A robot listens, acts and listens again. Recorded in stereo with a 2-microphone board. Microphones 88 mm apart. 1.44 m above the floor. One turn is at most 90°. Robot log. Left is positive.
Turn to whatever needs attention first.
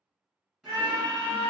note: The scream: about 50° right or 130° right.
cmd yaw -50
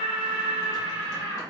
note: So it is at 80° right.
cmd yaw -80
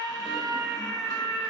end: Found it: a scream, straight ahead.